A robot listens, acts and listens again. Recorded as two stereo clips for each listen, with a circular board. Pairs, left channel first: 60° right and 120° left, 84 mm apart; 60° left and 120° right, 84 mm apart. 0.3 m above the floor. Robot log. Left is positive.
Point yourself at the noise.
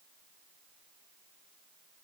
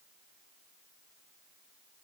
cmd idle
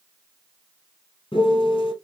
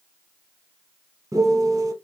note: The piano: 75° right.
cmd yaw -75
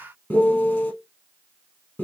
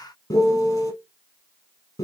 note: The piano is now 10° left.
cmd yaw +10
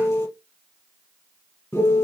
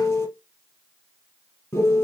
end: Found it: a piano, straight ahead, 2 to 4 m away.